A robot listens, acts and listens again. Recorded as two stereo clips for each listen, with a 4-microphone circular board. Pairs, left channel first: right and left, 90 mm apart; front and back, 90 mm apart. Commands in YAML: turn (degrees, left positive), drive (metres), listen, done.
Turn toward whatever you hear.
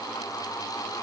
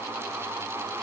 listen: true
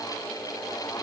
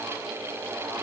listen: true
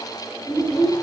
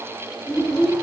turn: -60
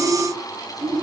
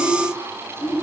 turn: -10
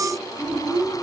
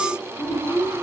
done: "Facing the child speaking, over 4 m away."